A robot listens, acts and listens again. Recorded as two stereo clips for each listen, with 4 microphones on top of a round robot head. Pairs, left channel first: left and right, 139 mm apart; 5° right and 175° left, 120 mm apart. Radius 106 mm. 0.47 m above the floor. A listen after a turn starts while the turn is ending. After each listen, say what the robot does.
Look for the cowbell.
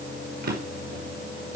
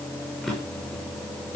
Keep listening.
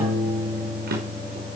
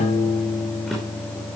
Keep listening.
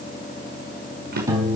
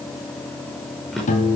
I can't make out a cowbell, only a piano and a drawer.